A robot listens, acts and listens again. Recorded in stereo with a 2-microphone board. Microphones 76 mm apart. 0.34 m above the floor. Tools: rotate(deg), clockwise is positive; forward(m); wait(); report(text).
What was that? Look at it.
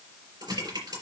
rotate(90)
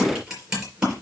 rotate(10)
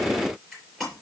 report("Found it: typing on a keyboard, straight ahead, over 4 m away.")